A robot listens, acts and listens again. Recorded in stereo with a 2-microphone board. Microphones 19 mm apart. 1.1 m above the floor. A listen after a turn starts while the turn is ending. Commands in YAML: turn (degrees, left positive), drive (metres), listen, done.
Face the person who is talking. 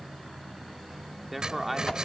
turn: -30
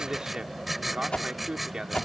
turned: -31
turn: -145
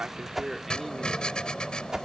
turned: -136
listen: true
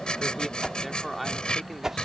done: "Facing the man speaking."